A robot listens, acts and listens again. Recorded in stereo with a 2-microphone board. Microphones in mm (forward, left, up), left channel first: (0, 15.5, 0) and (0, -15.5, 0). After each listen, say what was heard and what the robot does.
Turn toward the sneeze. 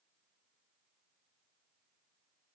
Keep listening.
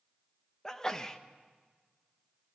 The sneeze: about 20° left or 160° left. Turn 20° left.
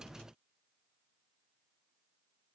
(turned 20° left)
Keep listening.
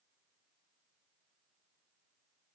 I heard a sneeze, but can't make it out now. It was about straight ahead or 140° left.